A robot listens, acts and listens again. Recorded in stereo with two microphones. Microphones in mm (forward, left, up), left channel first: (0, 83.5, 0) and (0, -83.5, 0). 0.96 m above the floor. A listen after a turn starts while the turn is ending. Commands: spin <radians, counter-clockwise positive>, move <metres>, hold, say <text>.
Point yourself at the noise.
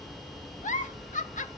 spin 0.87
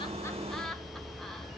say Facing the giggle.